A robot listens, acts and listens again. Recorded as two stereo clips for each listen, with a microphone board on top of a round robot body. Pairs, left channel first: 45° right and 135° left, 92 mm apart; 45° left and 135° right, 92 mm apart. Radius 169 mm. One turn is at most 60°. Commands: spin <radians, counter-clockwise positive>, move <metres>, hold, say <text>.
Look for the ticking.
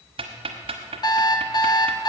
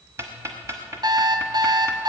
spin 1.05
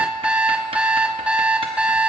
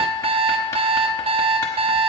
spin 1.05
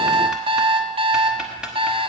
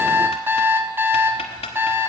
spin 0.87
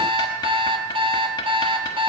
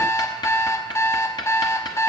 say Found it: ticking, straight ahead.